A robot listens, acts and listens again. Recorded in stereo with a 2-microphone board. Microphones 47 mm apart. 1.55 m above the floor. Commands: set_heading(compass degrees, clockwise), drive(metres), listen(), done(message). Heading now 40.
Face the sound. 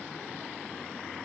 listen()
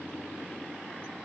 listen()
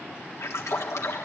set_heading(310)
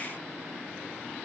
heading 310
done("Facing where the splash came from. I can't hear it now.")